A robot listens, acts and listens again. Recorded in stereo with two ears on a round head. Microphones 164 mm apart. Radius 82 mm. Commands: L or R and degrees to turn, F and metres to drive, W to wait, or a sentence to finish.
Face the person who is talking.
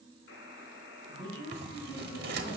L40
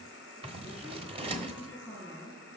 Found it: a woman speaking, straight ahead, over 4 m away.